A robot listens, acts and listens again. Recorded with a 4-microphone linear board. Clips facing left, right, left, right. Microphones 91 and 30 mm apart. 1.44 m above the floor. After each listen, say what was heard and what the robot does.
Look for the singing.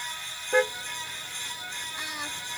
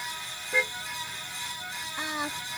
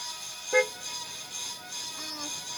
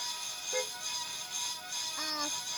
The singing: about 30° right or 150° right. Turn 30° right.
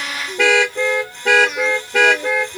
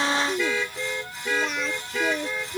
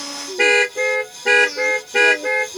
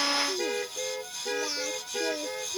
Facing the singing.